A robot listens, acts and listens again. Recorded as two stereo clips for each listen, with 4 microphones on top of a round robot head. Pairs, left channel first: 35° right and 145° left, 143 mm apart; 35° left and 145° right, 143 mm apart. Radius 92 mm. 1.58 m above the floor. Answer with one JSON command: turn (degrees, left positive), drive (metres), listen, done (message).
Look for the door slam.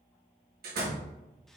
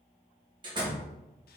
{"turn": 160}
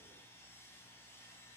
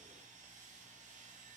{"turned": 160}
{"done": "I heard a door slam from this way, but can't make it out now."}